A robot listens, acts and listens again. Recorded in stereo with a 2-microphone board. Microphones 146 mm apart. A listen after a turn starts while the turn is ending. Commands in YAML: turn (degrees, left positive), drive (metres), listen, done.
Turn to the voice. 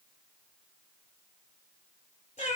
listen: true
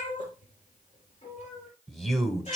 turn: 30
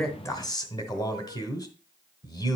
turn: 145
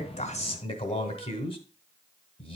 turn: 50
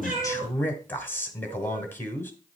turn: 15
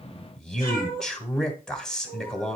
done: "Facing the man speaking."